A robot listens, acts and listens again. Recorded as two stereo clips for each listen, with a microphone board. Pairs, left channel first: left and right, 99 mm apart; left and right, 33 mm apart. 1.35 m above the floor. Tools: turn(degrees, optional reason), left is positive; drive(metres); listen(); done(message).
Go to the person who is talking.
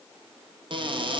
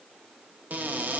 listen()
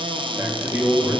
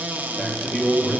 turn(degrees=-20, reason="The man speaking: about 20° right or 160° right.")
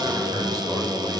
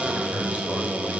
turn(degrees=-140, reason="So it is at 140° right.")
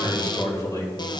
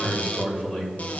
turn(degrees=35, reason="The man speaking is now 35° left.")
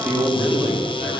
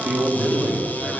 turn(degrees=-10, reason="The man speaking is now 10° right.")
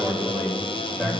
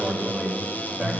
drive(metres=1.0)
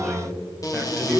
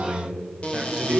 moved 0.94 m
turn(degrees=-10, reason="The man speaking is now 10° right.")
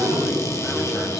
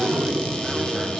drive(metres=1.0)
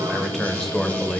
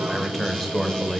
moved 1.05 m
drive(metres=1.0)
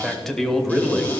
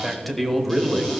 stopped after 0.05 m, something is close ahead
done("Arrived at the man speaking, straight ahead.")